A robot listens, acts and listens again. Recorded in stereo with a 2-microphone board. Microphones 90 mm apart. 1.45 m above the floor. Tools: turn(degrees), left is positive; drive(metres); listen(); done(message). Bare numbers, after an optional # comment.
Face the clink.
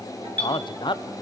# The clink: about 15° left or 165° left.
turn(15)
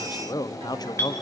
# So it is at 150° left.
turn(150)
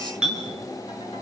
# The clink is now 10° right.
turn(-10)
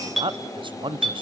done("Facing the clink.")